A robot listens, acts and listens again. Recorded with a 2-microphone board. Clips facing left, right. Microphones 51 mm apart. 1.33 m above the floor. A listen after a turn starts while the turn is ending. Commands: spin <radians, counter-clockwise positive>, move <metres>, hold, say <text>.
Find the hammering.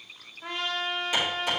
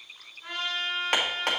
spin -1.13
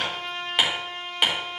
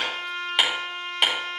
say Found it: hammering, straight ahead, 2 to 4 m away.